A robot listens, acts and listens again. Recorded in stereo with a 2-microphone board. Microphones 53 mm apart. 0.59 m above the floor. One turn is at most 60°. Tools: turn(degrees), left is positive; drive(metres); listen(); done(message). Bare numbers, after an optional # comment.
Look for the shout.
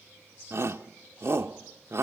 # The shout: about 60° right or 120° right.
turn(-60)
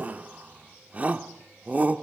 # So it is at 35° right.
turn(-35)
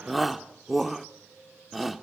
done("Facing the shout, 1 to 2 m away.")